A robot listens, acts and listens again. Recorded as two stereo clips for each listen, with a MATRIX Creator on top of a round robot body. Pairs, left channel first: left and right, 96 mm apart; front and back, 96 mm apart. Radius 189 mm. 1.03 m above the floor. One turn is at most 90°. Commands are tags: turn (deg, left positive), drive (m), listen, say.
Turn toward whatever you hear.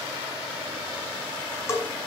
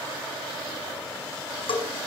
<turn deg="30"/>
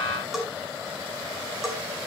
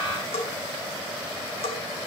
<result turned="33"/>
<say>Found it: a bell, straight ahead, over 4 m away.</say>